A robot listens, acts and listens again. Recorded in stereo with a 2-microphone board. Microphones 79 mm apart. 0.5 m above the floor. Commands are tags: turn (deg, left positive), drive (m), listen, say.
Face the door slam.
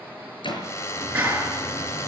<turn deg="90"/>
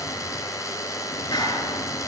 <say>Facing where the door slam came from. I can't hear it now.</say>